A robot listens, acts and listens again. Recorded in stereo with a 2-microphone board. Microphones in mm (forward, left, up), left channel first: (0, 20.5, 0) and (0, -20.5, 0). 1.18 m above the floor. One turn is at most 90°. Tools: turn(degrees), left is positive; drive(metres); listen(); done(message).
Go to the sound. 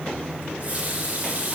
turn(degrees=-40)
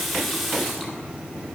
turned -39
drive(metres=1.0)
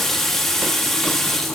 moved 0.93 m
drive(metres=1.0)
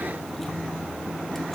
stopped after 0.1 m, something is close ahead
listen()
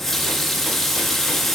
done("I am next to the running tap.")